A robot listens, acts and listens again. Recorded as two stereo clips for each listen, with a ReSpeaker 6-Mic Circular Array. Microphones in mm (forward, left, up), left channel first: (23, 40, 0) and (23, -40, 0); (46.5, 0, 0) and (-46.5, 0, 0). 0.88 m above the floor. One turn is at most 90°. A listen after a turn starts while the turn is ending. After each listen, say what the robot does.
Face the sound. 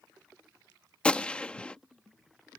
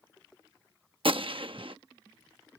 Turn 90° left.
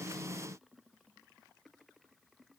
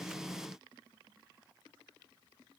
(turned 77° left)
Turn 90° left.
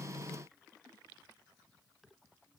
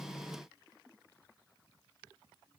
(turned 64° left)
Turn 25° left.
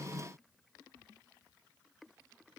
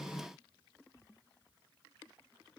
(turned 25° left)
Facing where the gunshot came from. I can't hear it now.